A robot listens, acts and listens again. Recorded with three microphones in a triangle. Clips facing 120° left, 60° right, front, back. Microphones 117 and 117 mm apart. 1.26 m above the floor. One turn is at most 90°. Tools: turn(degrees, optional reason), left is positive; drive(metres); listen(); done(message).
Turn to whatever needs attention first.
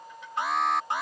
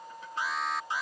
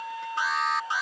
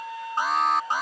turn(degrees=90, reason="The alarm: 140° left.")
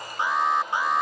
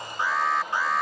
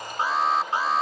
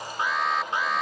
turn(degrees=50, reason="The alarm is now 50° left.")
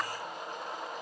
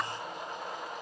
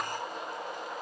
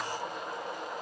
listen()
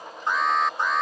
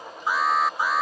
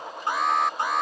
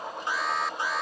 turn(degrees=25, reason="The alarm is now 25° left.")
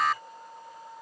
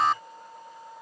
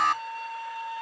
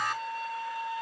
done("Found it: an alarm, straight ahead.")